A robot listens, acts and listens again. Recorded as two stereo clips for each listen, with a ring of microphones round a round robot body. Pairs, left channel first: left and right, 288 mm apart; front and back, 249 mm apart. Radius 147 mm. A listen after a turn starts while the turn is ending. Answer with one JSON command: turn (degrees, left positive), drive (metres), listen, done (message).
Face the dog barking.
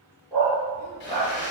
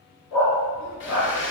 {"turn": 15}
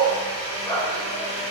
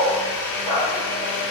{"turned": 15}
{"done": "Found it: a dog barking, straight ahead, 2 to 4 m away."}